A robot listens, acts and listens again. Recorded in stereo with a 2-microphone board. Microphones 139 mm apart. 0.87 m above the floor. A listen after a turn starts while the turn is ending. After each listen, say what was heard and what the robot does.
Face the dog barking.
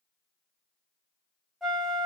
Keep listening.
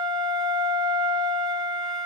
Keep listening.
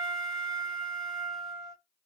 I can't make out a dog barking, only a flute.